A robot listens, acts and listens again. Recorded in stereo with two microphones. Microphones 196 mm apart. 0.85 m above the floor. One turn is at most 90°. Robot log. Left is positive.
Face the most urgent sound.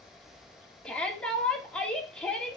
cmd yaw +30
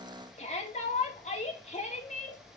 note: So it is at 145° left.
cmd yaw +90
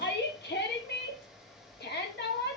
note: The shout is now 65° left.
cmd yaw +65
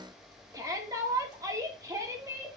note: The shout is now 15° right.
cmd yaw -15
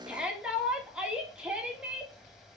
end: Facing the shout, 2 to 4 m away.